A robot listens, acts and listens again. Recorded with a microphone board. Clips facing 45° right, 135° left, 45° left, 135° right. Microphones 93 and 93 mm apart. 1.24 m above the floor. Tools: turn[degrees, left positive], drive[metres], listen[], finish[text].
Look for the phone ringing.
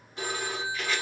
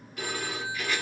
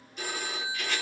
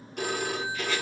Thought: The phone ringing: 110° right.
Action: turn[-110]
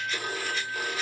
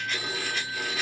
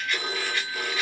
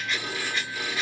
Action: finish[Found it: a phone ringing, straight ahead, 1 to 2 m away.]